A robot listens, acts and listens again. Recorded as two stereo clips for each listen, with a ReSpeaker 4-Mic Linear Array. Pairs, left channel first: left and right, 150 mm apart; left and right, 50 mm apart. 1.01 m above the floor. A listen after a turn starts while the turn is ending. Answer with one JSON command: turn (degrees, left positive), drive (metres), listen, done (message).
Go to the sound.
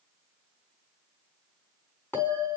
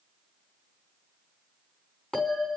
{"turn": 30}
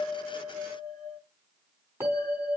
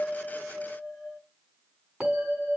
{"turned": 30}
{"turn": -15}
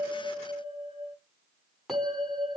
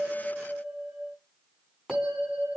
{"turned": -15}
{"drive": 1.0}
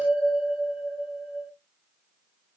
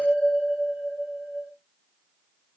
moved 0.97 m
{"drive": 1.0}
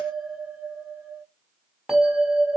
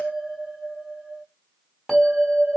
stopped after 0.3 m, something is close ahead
{"done": "Blocked. The bell is further on, straight ahead."}